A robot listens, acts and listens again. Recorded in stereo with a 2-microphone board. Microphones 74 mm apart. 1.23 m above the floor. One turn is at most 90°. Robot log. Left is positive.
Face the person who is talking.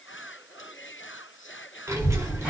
note: The child speaking: about 35° right or 145° right.
cmd yaw -35
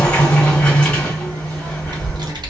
note: So it is at 105° right.
cmd yaw -90
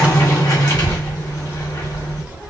note: The child speaking is now 20° right.
cmd yaw -20
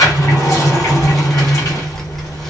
end: Facing the child speaking.